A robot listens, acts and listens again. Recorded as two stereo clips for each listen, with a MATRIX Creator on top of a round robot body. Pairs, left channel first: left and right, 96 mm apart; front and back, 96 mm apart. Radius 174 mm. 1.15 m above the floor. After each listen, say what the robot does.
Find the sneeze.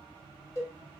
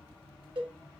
Keep listening.
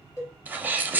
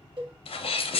Turn 15° right.
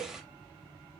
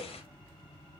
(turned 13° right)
I heard a sneeze from this way, but can't make it out now.